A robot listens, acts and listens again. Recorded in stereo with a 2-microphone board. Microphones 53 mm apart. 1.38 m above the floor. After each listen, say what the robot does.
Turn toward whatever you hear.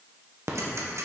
Turn 65° right.
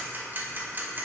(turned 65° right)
Turn 40° right.
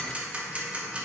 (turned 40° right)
Turn 20° right.
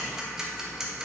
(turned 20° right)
Turn 10° right.
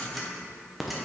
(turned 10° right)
Facing the ticking.